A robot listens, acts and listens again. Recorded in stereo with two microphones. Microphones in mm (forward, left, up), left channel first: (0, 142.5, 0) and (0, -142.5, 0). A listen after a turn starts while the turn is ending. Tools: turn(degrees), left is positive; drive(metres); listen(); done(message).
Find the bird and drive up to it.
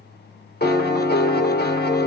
listen()
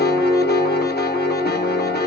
listen()
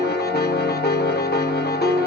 done("I can't make out a bird, only a piano.")